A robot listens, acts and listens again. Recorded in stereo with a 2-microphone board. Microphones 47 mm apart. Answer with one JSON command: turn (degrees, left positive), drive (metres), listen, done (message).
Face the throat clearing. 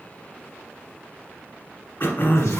{"turn": 55}
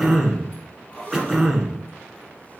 {"done": "Facing the throat clearing, 1 to 2 m away."}